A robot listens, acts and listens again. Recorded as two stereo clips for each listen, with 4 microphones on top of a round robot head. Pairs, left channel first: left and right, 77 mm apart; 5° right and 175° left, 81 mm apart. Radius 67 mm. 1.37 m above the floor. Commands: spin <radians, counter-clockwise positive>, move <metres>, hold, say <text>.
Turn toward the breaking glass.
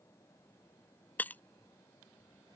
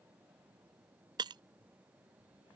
spin 2.71
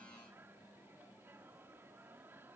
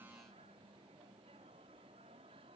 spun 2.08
spin 0.61
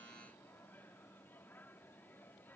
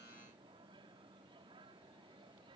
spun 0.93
spin -0.35
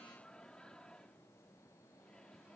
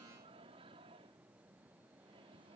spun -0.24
say I heard breaking glass from this way, but can't make it out now.